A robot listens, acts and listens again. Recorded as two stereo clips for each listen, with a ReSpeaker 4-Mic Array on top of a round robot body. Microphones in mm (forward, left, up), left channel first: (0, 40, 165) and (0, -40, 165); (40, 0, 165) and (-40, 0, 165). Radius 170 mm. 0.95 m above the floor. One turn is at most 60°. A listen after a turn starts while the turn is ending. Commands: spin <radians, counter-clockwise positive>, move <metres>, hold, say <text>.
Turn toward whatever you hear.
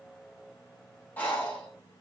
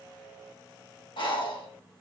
spin 0.35
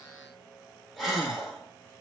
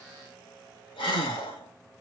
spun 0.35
say Found it: breathing, straight ahead.